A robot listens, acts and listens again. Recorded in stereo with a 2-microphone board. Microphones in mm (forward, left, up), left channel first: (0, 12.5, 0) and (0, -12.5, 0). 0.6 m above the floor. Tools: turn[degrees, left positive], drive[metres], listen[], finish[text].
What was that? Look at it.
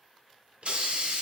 Thought: The hiss: about 55° right or 125° right.
Action: turn[-55]
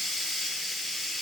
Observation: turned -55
Action: finish[Facing the hiss, under 1 m away.]